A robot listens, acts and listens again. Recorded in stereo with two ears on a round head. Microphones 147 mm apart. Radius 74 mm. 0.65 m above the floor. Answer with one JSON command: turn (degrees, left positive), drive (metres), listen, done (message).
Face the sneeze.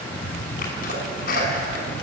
{"turn": 60}
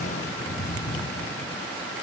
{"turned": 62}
{"listen": true}
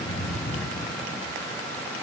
{"done": "I heard a sneeze, but can't make it out now. It was about straight ahead or 60° left."}